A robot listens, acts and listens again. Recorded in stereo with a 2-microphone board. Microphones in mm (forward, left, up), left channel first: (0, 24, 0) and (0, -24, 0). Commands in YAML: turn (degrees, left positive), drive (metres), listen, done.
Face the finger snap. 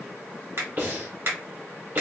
turn: -55
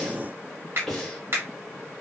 turn: -60
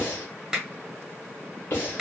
turn: -10
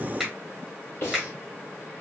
done: "Found it: a finger snap, straight ahead, 1 to 2 m away."